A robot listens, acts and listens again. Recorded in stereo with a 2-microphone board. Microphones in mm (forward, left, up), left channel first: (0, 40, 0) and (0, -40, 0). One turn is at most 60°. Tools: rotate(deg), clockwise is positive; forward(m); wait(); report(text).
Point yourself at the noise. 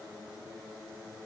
wait()
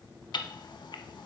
rotate(-60)
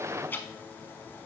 wait()
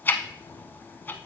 rotate(-25)
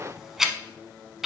report("Facing the ticking, under 1 m away.")